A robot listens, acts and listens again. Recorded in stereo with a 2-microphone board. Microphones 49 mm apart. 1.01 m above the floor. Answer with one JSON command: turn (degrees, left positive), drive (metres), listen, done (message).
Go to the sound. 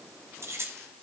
{"turn": -60}
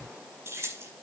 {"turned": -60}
{"turn": -60}
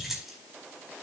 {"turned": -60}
{"drive": 1.0}
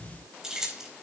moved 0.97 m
{"turn": -10}
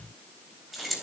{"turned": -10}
{"drive": 1.0}
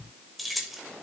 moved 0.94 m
{"drive": 1.0}
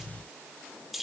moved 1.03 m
{"drive": 1.0}
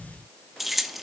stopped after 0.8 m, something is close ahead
{"done": "I am next to the keys jangling."}